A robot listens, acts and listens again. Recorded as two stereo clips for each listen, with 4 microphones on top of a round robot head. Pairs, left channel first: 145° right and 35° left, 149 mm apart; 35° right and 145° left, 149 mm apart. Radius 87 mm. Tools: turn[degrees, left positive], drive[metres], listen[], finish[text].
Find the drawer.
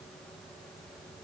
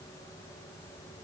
Action: listen[]
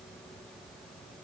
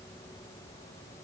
Action: listen[]
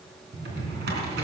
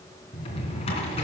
Thought: The drawer: 20° left.
Action: turn[20]
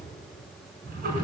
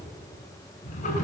Action: finish[Facing the drawer, 2 to 4 m away.]